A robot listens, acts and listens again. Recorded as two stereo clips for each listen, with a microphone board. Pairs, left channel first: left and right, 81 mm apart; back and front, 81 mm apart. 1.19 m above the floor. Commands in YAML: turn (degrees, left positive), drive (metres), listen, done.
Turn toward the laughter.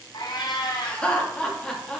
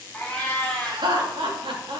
done: "Facing the laughter, 2 to 4 m away."